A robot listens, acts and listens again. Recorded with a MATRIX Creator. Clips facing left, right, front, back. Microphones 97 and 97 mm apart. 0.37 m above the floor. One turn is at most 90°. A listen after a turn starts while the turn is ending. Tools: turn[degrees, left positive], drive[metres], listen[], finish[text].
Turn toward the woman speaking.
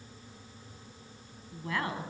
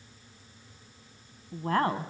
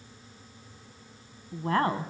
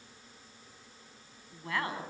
Thought: The woman speaking: 45° right.
Action: turn[-45]
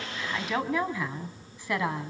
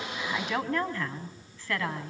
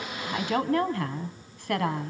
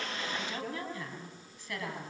Thought: The woman speaking is now 20° left.
Action: turn[20]
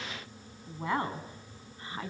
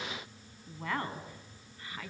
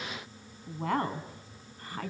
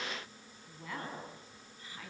Thought: The woman speaking is now 30° left.
Action: turn[30]
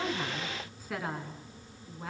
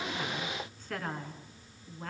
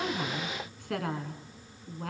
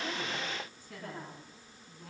Action: finish[Found it: a woman speaking, straight ahead, 2 to 4 m away.]